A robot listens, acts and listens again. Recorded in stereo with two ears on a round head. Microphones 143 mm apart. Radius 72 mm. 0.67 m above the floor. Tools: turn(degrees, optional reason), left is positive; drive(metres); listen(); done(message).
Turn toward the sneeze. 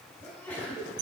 turn(degrees=30)
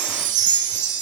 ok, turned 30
listen()
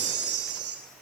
done("I heard a sneeze, but can't make it out now. It was about 20° right or 140° left.")